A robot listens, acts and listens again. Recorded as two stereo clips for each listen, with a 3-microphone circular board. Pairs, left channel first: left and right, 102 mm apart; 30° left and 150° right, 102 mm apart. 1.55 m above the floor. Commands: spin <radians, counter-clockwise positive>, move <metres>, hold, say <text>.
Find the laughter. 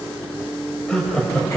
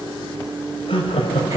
spin 0.17
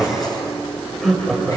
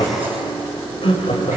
say Facing the laughter, over 4 m away.